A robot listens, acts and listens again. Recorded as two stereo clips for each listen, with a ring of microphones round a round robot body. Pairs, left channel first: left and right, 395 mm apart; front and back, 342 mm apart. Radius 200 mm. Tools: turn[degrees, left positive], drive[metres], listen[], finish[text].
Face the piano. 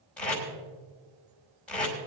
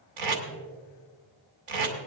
Action: listen[]
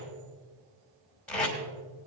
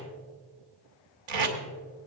Action: listen[]
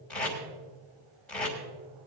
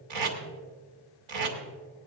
Action: finish[I can't make out a piano, only tape being pulled.]